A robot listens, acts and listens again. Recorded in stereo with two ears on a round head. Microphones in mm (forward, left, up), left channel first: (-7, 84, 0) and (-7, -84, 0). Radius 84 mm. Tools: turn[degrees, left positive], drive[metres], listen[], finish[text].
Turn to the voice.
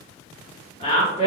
Thought: The woman speaking: about 35° left or 145° left.
Action: turn[35]
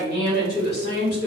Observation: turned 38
Thought: So it is at 100° left.
Action: turn[100]
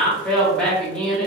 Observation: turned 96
Action: finish[Found it: a woman speaking, straight ahead, 1 to 2 m away.]